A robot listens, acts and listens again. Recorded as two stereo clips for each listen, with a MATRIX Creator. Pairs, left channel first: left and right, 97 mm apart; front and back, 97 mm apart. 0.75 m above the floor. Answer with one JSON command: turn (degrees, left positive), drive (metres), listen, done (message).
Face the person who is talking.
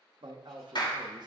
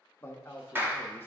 {"turn": -65}
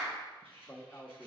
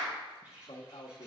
{"turn": 20}
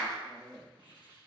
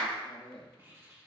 {"done": "Found it: a man speaking, straight ahead, under 1 m away."}